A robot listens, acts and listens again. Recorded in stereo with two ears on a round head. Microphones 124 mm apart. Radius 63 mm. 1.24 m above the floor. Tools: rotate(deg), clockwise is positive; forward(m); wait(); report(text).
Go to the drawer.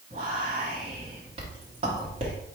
wait()
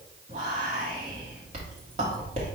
wait()
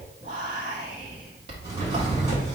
rotate(35)
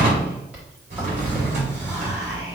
rotate(110)
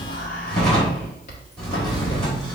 forward(1.0)
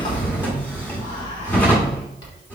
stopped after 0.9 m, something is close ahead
rotate(-15)
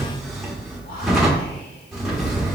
report("I am next to the drawer.")